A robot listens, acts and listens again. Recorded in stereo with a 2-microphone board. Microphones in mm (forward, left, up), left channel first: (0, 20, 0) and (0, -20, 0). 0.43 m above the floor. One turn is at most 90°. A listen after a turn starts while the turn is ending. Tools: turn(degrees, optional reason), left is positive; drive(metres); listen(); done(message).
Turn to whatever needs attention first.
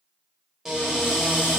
listen()
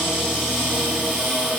listen()
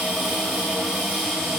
done("I can't make out anything urgent to turn to.")